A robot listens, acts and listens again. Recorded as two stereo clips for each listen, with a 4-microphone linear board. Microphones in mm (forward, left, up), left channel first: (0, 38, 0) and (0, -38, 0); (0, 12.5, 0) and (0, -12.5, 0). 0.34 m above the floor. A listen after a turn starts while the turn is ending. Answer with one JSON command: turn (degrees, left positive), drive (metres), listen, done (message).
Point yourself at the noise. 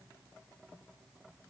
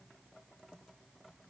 {"listen": true}
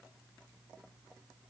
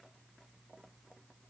{"listen": true}
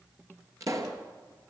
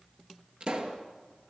{"turn": -45}
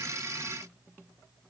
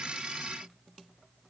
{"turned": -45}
{"listen": true}
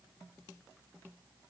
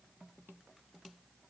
{"done": "I heard a pop, but can't make it out now. It was about straight ahead or 90° right."}